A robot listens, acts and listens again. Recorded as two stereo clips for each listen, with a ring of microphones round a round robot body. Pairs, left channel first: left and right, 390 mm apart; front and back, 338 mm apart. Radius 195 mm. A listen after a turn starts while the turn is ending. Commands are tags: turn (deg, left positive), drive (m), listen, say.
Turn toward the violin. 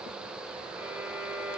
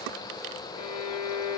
<say>Facing the violin, 2 to 4 m away.</say>